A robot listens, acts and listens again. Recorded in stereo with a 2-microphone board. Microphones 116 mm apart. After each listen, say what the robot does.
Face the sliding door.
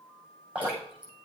Keep listening.
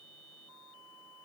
Keep listening.
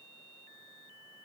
I can't make out a sliding door to turn to.